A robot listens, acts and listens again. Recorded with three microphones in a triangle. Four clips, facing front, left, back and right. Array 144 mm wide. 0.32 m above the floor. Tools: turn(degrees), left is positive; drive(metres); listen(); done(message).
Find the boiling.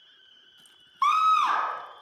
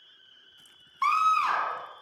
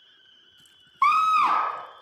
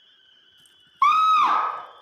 listen()
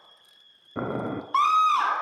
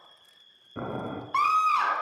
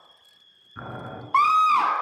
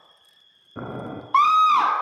done("Facing the boiling, 2 to 4 m away.")